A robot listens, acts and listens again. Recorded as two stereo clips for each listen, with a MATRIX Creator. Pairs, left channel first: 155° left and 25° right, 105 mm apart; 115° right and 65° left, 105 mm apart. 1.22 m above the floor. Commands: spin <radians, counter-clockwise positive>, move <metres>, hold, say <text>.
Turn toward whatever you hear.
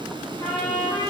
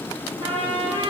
spin 1.75
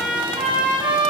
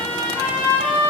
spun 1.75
spin 0.17
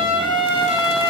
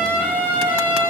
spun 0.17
say Found it: a trumpet, straight ahead, over 4 m away.